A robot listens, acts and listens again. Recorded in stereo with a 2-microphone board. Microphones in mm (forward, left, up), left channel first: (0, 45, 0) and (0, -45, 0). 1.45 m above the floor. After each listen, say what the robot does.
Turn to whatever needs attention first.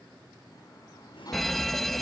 Turn 30° left.
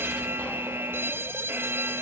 Turn 30° right.
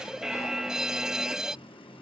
Found it: a fire alarm, straight ahead.